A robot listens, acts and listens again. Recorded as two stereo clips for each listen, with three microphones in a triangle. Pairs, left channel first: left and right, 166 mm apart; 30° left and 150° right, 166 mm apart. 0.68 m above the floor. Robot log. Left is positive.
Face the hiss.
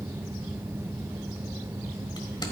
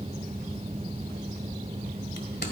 cmd idle
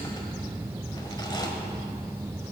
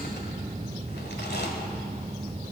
cmd idle
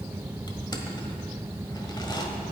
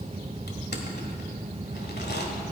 end: I can't make out a hiss, only crushing.